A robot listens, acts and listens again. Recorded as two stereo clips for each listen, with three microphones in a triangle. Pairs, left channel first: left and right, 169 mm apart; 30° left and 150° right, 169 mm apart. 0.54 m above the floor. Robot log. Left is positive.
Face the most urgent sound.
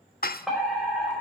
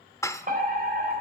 note: The fire alarm: straight behind.
cmd yaw +180
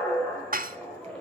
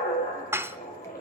end: Facing the fire alarm.